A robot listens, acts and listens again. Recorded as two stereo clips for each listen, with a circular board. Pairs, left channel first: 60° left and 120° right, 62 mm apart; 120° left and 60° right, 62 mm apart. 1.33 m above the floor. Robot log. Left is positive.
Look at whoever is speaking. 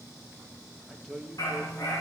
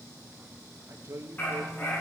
note: The man speaking: 25° right.
cmd yaw -25
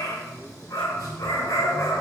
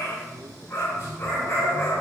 cmd idle
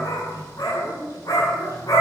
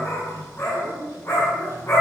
cmd idle
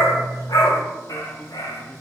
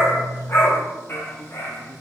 end: I heard a man speaking from this way, but can't make it out now.